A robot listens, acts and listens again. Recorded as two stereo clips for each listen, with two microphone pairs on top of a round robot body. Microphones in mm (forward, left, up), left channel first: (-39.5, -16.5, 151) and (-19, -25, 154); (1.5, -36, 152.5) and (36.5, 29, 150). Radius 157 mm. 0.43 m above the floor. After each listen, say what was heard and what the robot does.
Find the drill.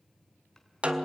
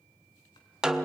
Keep listening.
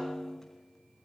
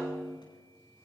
Keep listening.
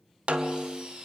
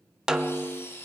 The drill: 60° right. Turn 60° right.
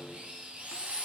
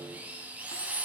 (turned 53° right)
Found it: a drill, straight ahead, over 4 m away.